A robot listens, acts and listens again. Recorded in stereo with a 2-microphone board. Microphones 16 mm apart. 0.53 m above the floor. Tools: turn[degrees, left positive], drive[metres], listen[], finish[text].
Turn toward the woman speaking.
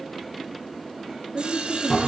Thought: The woman speaking: about 30° right or 150° right.
Action: turn[-30]
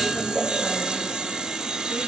Action: listen[]
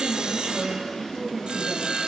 Action: finish[Found it: a woman speaking, straight ahead.]